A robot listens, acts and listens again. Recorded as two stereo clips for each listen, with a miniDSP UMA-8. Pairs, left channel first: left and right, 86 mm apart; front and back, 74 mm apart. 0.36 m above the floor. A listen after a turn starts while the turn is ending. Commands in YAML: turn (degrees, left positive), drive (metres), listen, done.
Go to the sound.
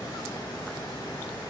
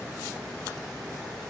listen: true
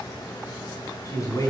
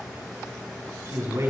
turn: 135
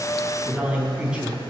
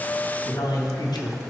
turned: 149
turn: -10
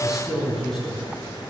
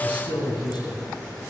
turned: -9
drive: 1.0
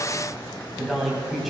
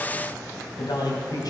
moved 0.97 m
drive: 1.0
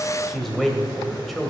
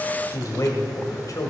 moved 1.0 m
drive: 1.0
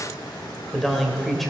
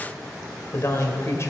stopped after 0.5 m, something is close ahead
done: "Arrived at the man speaking, straight ahead."